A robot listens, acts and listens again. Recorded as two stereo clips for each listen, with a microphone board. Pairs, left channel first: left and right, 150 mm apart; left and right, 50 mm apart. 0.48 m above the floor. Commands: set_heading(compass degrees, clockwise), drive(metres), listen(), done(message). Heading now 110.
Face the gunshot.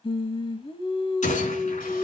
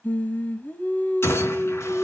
set_heading(60)
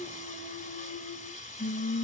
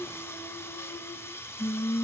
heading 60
listen()
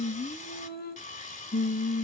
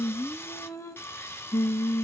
done("I heard a gunshot, but can't make it out now. It was about straight ahead or 80° left.")